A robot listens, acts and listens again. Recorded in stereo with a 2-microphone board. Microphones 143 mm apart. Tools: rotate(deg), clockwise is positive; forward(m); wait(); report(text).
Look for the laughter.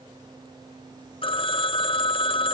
wait()
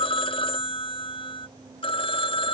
wait()
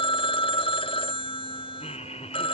rotate(-50)
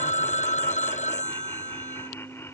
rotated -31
rotate(-20)
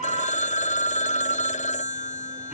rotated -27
rotate(10)
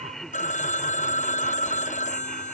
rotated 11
report("Found it: laughter, straight ahead.")